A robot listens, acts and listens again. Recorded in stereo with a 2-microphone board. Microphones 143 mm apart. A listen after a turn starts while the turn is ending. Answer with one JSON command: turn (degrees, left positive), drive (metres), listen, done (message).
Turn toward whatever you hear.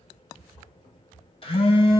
{"turn": 40}
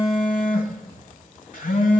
{"turn": 95}
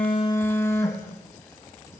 {"turn": 20}
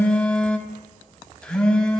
{"turn": 10}
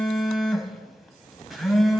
{"done": "Found it: a phone buzzing, straight ahead, under 1 m away."}